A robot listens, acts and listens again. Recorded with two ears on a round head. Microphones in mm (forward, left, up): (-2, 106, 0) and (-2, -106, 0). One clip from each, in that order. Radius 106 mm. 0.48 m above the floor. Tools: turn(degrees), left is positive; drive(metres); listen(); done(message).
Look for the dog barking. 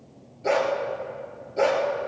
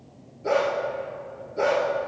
turn(degrees=30)
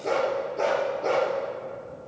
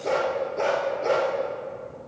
turn(degrees=-10)
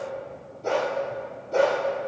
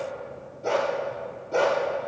done("Facing the dog barking, over 4 m away.")